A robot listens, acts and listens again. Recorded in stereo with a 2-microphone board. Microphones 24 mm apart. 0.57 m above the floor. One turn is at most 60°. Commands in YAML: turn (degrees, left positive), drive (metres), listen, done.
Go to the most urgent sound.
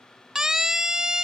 turn: -25
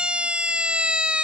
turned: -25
turn: -60
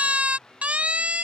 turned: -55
turn: -60
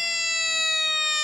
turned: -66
turn: -10
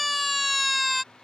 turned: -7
drive: 1.0
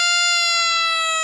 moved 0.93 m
drive: 1.0
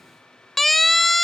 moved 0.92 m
drive: 1.0
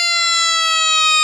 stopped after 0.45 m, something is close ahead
turn: 15
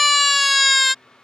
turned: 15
done: "Arrived at the siren, straight ahead."